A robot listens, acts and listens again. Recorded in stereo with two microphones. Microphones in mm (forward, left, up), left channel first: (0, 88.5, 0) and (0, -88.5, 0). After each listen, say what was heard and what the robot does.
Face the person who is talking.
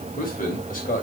The man speaking: about 50° left or 130° left. Turn 50° left.
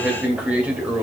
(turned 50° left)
So it is at 10° right. Turn 10° right.
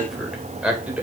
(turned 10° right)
The man speaking is now 10° right. Turn 10° right.
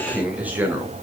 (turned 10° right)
The man speaking is now 10° right. Turn 10° right.
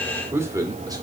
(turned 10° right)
The man speaking is now 20° right. Turn 20° right.
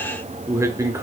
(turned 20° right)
The man speaking is now 15° right. Turn 15° right.
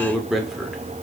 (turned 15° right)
Facing the man speaking, 1 to 2 m away.